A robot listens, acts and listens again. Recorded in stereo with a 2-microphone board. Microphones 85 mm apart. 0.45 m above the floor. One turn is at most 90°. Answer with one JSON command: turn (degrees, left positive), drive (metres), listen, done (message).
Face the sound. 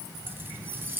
{"turn": -25}
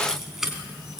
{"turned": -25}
{"done": "Found it: keys jangling, straight ahead."}